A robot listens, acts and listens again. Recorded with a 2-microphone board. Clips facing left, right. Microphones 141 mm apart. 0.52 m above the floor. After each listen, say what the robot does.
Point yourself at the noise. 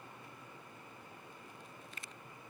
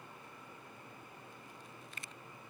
Keep listening.
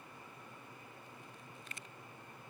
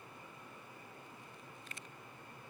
Keep listening.
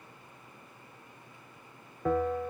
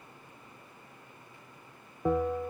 Turn 30° right.
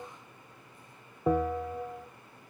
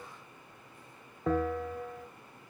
Turn 15° left.
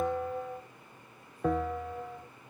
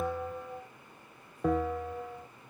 Found it: a bell, straight ahead, 1 to 2 m away.